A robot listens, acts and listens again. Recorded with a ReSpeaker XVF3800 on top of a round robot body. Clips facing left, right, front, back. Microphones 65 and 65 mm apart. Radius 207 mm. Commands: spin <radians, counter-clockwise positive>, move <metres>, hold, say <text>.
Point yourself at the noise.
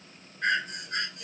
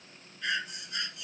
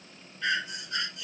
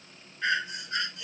spin 2.18
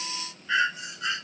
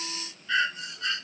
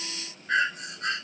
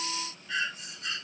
spin 0.35
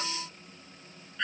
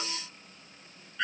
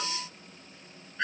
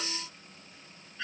say Facing the breathing.